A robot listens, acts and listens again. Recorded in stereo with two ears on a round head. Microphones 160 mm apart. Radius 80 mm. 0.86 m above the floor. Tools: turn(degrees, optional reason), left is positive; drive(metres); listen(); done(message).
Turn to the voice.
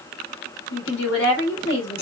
turn(degrees=75, reason="The woman speaking: about 75° left or 105° left.")
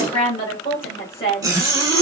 turn(degrees=30, reason="So it is at 30° left.")
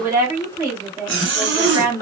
turn(degrees=-20, reason="The woman speaking is now 20° right.")
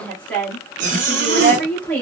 done("Facing the woman speaking.")